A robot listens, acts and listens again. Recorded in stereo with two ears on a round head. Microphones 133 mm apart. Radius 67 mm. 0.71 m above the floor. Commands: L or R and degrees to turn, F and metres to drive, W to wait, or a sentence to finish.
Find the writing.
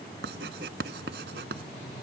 R75
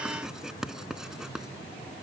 Found it: writing, straight ahead.